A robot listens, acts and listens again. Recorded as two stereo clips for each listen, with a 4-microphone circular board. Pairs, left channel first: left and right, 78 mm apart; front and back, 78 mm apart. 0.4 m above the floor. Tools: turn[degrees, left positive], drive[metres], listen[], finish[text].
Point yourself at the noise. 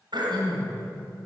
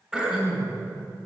Thought: The throat clearing: 100° right.
Action: turn[-100]
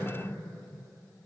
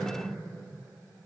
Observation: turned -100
Thought: The throat clearing is now 15° right.
Action: turn[-15]
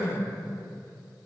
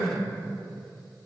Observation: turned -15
Action: finish[Facing the throat clearing.]